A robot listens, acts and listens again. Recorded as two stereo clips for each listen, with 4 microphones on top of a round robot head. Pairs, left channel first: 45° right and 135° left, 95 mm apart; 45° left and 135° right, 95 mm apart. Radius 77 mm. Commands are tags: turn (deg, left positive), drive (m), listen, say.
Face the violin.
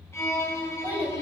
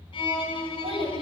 <turn deg="20"/>
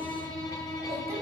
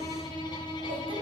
<say>Facing the violin, 1 to 2 m away.</say>